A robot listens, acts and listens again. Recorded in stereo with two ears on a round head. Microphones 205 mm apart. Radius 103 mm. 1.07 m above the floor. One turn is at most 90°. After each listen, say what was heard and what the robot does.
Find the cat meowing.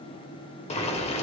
Keep listening.
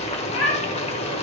The cat meowing: about 60° left or 120° left. Turn 60° left.
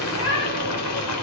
So it is at 65° left. Turn 65° left.
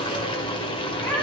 The cat meowing is now 10° left. Turn 10° left.
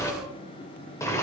Keep listening.
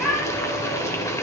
Facing the cat meowing.